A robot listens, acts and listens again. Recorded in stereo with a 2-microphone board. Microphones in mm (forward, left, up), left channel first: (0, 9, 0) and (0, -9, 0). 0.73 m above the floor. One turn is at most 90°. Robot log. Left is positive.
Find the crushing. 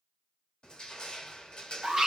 note: The crushing: about 55° left or 125° left.
cmd yaw +55
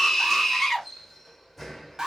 end: Facing the crushing.